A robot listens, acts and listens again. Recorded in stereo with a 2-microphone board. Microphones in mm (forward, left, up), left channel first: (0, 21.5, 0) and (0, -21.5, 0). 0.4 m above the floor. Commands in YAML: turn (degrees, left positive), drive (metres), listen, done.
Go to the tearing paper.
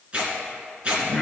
turn: -30
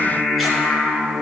listen: true
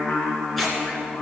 drive: 1.0
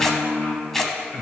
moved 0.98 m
turn: 10
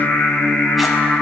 listen: true
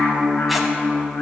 listen: true
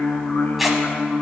drive: 1.0
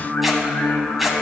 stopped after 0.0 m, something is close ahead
done: "Arrived at the tearing paper, straight ahead."